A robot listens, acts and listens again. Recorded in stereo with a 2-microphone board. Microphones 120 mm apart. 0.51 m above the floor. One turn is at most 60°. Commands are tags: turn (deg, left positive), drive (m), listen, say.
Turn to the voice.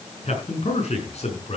<turn deg="60"/>
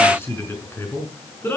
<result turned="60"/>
<turn deg="20"/>
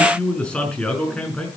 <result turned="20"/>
<turn deg="10"/>
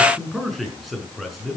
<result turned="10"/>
<say>Facing the man speaking.</say>